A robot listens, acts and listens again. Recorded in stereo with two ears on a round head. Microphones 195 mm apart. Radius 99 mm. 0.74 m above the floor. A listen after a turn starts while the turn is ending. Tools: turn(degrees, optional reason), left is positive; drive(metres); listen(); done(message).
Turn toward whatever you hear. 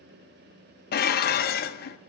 turn(degrees=45, reason="The dishes clattering: about 45° left or 135° left.")
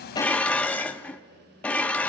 done("Found it: dishes clattering, straight ahead, under 1 m away.")